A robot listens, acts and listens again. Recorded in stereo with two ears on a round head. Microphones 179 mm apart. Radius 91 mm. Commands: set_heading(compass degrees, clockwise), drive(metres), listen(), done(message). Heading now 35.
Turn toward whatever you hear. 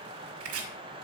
set_heading(125)
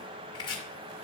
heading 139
set_heading(119)
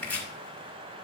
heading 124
done("Facing the chopping.")